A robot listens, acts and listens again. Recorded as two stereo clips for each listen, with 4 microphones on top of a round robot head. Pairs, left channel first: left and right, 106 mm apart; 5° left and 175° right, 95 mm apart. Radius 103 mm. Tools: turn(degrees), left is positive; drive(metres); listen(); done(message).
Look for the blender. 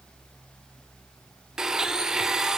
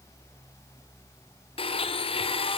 done("Found it: a blender, straight ahead, 1 to 2 m away.")